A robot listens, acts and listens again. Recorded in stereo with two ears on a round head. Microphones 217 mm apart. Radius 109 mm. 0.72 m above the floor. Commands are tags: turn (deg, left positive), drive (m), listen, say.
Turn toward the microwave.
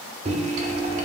<turn deg="-30"/>
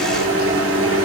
<turn deg="-120"/>
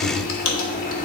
<turn deg="35"/>
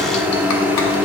<say>Facing the microwave, under 1 m away.</say>